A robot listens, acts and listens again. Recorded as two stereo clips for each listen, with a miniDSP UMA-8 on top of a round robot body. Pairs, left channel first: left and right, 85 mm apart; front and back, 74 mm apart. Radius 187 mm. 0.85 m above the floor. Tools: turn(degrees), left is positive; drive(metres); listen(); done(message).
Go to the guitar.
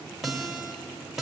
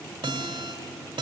turn(degrees=-175)
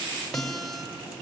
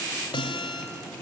drive(metres=1.0)
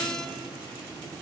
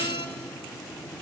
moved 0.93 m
drive(metres=1.0)
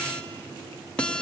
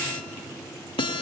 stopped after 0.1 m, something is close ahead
turn(degrees=10)
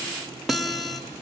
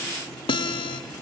done("Arrived at the guitar, straight ahead.")